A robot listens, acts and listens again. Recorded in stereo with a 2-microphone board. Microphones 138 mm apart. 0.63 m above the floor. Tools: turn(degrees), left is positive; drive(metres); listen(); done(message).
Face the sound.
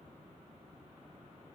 listen()
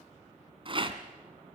turn(degrees=-40)
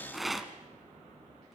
done("Facing the rattle, 1 to 2 m away.")